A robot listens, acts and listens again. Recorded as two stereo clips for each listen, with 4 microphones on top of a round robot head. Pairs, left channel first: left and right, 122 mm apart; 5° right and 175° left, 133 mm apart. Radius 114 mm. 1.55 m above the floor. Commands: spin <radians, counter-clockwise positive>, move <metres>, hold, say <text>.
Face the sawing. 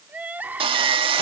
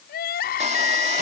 spin -2.18
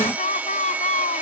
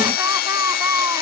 spin -0.17
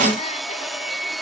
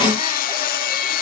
say Found it: sawing, straight ahead.